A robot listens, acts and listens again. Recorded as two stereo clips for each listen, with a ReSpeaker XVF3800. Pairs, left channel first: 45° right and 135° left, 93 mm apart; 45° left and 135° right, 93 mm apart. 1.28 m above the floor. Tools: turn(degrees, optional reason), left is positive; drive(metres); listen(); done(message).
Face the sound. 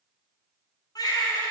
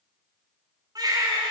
turn(degrees=-90, reason="The baby crying: 90° right.")
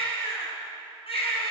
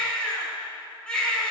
turn(degrees=-35, reason="The baby crying is now 35° right.")
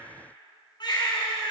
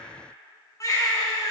turn(degrees=-10, reason="The baby crying is now 10° right.")
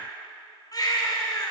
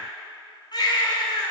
done("Found it: a baby crying, straight ahead.")